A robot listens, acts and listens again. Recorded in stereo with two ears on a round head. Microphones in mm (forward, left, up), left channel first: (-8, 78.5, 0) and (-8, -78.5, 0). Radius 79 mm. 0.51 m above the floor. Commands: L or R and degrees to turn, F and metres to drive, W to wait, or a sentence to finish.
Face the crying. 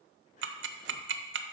W
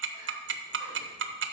W
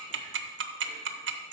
I can't make out crying, only ticking.